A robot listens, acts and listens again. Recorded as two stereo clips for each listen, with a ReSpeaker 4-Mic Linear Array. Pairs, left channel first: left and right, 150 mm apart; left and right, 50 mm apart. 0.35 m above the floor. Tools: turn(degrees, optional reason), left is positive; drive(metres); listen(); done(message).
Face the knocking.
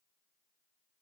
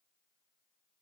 listen()
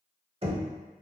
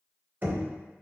turn(degrees=-40, reason="The knocking: about 40° right or 140° right.")
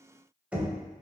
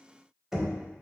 turn(degrees=-10, reason="So it is at 10° right.")
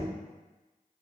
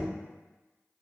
listen()
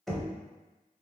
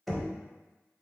done("Found it: knocking, straight ahead, under 1 m away.")